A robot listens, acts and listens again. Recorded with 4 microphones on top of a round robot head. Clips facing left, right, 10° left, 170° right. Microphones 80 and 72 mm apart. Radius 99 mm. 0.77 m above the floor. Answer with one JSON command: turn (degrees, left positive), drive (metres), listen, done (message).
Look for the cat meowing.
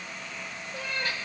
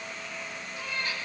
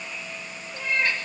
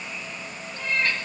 {"turn": 95}
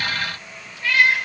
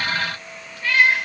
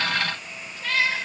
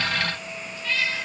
{"done": "Found it: a cat meowing, straight ahead, over 4 m away."}